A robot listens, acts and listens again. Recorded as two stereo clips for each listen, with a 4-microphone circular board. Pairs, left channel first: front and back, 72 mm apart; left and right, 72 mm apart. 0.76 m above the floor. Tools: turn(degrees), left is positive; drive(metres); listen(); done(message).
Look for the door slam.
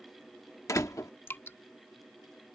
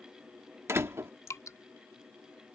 turn(degrees=-40)
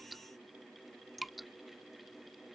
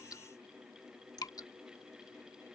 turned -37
done("I heard a door slam from this way, but can't make it out now.")